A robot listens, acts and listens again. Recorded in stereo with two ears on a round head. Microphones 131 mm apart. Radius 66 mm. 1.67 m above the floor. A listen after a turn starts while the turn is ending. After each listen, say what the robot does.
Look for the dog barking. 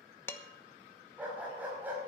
Turn 30° right.
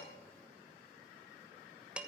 Keep listening.
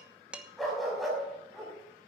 Turn 30° left.
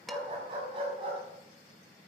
Turn 40° right.
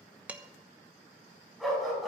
Facing the dog barking.